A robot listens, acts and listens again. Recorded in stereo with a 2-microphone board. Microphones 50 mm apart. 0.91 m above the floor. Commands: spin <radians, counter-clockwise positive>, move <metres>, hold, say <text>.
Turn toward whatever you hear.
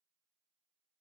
hold
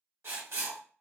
spin -0.96
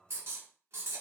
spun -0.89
spin -1.05
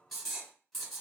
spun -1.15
say Found it: writing, straight ahead.